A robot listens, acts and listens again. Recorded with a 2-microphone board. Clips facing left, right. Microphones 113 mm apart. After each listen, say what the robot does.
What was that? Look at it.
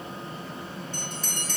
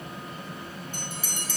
Turn 30° right.
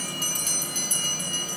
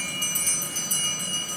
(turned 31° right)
Turn 140° right.
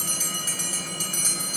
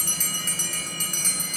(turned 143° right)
Found it: a bell, straight ahead.